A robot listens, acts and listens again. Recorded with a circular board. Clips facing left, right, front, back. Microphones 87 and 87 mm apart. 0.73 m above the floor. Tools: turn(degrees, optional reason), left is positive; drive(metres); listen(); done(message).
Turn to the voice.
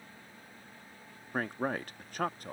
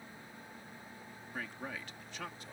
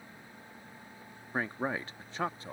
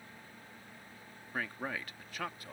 turn(degrees=60, reason="The man speaking: 60° left.")
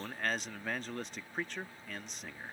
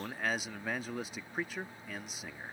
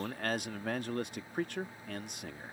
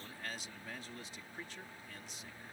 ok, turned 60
done("Found it: a man speaking, straight ahead.")